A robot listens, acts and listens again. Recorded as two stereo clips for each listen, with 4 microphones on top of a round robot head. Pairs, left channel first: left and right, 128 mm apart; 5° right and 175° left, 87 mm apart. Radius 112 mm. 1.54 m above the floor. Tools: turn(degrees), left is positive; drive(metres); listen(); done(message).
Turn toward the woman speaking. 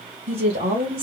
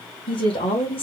turn(degrees=-35)
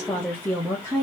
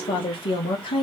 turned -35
turn(degrees=15)
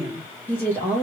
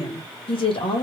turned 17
turn(degrees=15)
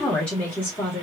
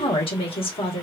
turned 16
turn(degrees=15)
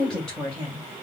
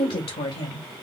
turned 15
turn(degrees=10)
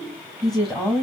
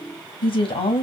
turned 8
done("Found it: a woman speaking, straight ahead.")